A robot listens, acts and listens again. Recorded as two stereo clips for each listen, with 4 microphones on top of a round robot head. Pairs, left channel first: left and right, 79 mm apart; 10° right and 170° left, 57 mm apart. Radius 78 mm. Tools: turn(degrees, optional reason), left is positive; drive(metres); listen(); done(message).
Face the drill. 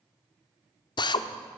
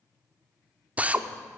turn(degrees=105, reason="The drill: 105° left.")
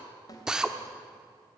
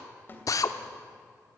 turn(degrees=-10, reason="The drill is now 10° right.")
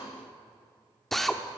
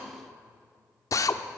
done("Found it: a drill, straight ahead.")